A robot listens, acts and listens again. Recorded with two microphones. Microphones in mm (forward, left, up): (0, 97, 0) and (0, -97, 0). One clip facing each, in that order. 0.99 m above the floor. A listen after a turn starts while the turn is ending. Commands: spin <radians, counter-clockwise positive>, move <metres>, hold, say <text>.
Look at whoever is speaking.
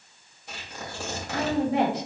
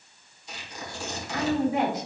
spin 1.22
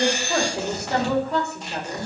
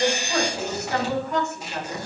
spin 0.61
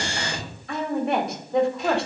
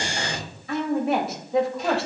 say Facing the woman speaking, 1 to 2 m away.